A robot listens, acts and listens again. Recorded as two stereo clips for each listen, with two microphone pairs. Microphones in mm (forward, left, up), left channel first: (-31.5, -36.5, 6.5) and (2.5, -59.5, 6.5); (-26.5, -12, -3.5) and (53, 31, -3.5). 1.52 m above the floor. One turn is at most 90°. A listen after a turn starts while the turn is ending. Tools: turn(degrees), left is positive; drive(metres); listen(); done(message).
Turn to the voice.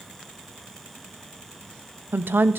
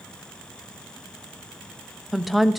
turn(degrees=-60)
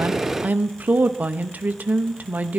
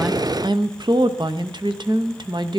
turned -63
done("Facing the woman speaking.")